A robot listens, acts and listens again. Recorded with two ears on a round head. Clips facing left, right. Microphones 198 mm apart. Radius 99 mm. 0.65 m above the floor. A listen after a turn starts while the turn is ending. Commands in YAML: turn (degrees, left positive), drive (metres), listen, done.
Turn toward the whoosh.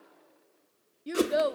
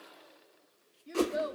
turn: 20
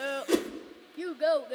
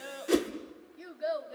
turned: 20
done: "Facing the whoosh."